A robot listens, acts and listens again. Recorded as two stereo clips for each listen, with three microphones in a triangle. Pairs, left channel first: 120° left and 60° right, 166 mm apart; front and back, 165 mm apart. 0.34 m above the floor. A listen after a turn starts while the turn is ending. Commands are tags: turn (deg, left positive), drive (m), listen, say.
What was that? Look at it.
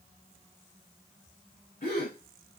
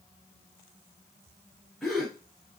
<turn deg="90"/>
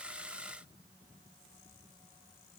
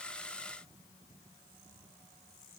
<say>I heard a gasp from this way, but can't make it out now.</say>